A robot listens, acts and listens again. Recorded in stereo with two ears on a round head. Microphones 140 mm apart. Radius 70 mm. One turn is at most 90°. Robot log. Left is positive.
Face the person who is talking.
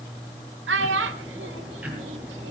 cmd yaw -90
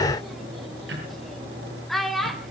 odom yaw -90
end: Facing the child speaking, 1 to 2 m away.